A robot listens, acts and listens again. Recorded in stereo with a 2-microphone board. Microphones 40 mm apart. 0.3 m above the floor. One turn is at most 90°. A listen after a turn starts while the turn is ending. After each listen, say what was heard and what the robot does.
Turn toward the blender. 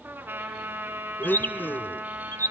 The blender: about 55° left or 125° left. Turn 55° left.
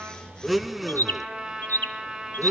Facing the blender.